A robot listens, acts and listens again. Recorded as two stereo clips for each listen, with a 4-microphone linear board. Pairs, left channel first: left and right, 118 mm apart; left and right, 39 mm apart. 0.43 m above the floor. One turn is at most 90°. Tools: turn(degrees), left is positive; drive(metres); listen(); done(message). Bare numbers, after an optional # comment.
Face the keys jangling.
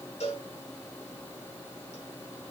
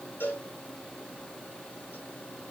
listen()
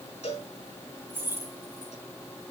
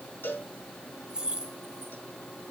# The keys jangling: about 20° right or 160° right.
turn(-20)
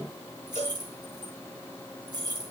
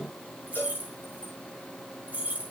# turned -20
# So it is at 140° right.
turn(-90)
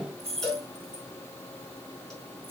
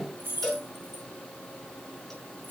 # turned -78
# The keys jangling is now 60° right.
turn(-60)
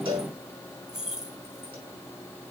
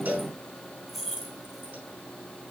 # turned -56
done("Found it: keys jangling, straight ahead, 2 to 4 m away.")